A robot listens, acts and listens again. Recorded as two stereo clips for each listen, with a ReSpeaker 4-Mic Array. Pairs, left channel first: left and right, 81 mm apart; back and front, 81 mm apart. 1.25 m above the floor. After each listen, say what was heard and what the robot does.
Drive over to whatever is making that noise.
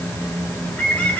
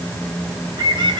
The bird: 15° left. Turn 15° left.
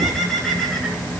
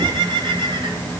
Drive 1.0 m forward.
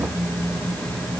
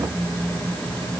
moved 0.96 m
Keep listening.
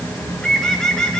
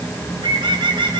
The bird is now 10° left. Turn 10° left.
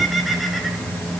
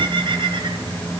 Drive 1.0 m forward.
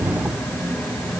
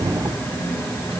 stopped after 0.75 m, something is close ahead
Keep listening.
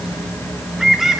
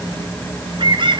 I am next to the bird.